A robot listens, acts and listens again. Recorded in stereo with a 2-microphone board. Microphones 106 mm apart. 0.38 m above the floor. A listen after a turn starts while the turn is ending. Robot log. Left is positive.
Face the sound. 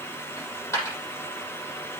note: The dropped coin: about 25° left or 155° left.
cmd yaw +25
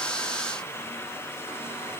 cmd idle
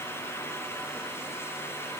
end: I heard a dropped coin, but can't make it out now. It was about straight ahead or 130° left.